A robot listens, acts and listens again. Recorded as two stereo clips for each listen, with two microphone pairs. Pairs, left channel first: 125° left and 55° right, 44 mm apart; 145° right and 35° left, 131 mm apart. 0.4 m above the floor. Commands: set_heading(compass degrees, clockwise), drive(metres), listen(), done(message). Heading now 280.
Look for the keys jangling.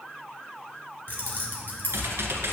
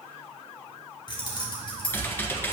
set_heading(115)
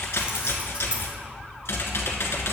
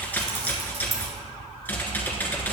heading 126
set_heading(116)
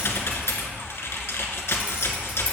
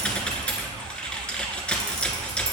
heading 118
listen()
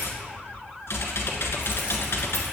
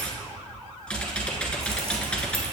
listen()
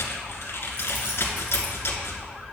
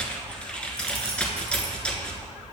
done("I heard keys jangling from this way, but can't make it out now.")